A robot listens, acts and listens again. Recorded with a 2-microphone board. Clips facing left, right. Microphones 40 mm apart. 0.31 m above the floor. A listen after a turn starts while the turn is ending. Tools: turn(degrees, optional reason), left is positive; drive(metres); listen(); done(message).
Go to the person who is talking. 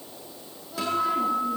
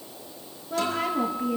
turn(degrees=-70, reason="The woman speaking: about 70° right or 110° right.")
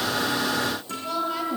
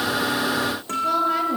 turn(degrees=-35, reason="So it is at 35° right.")
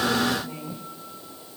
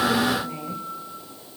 turn(degrees=-20, reason="The woman speaking is now 20° right.")
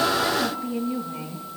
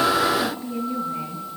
drive(metres=1.0)
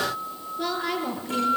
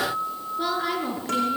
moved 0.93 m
turn(degrees=-10, reason="The woman speaking is now 10° right.")
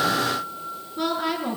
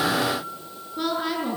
drive(metres=1.0)
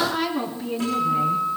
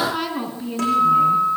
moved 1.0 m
drive(metres=1.0)
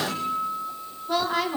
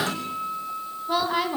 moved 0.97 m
turn(degrees=-10, reason="The woman speaking is now 10° right.")
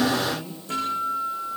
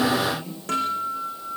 drive(metres=1.0)
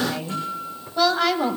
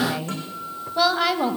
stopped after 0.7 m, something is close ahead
done("I am next to the woman speaking.")